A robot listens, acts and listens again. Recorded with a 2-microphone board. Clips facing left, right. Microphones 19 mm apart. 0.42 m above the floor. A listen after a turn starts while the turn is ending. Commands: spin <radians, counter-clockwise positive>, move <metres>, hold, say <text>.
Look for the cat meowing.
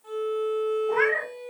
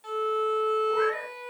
spin 0.87
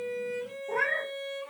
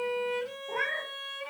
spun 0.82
say Facing the cat meowing.